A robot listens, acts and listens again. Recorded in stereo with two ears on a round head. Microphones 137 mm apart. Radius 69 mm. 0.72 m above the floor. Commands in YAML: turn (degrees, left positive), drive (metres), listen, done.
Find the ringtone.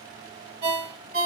turn: -65
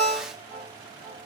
done: "Facing the ringtone."